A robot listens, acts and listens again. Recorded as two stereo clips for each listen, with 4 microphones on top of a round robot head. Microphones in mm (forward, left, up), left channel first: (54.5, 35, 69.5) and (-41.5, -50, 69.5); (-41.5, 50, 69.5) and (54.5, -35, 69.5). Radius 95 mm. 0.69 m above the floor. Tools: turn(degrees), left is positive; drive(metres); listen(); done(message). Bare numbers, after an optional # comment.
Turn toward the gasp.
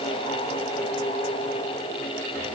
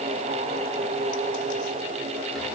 listen()
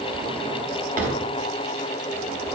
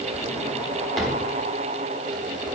listen()
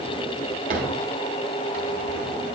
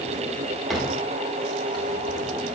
done("I can't make out a gasp to turn to.")